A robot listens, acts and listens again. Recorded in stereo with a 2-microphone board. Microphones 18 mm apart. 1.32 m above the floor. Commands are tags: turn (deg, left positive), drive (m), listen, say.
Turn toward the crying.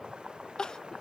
<turn deg="40"/>
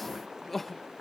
<say>Found it: crying, straight ahead.</say>